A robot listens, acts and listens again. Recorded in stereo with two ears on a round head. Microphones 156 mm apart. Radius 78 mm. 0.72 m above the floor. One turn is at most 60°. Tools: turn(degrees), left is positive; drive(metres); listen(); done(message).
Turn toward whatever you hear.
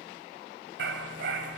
turn(degrees=-60)
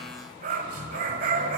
turn(degrees=-50)
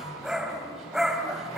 done("Found it: a dog barking, straight ahead, 1 to 2 m away.")